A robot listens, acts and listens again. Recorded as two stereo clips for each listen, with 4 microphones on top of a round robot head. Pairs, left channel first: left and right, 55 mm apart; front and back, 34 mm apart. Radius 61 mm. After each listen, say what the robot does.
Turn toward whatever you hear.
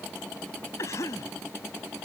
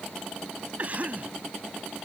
Turn 130° left.
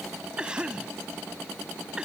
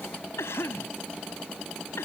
Turn 15° right.
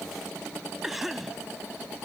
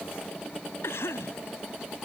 Facing the cough.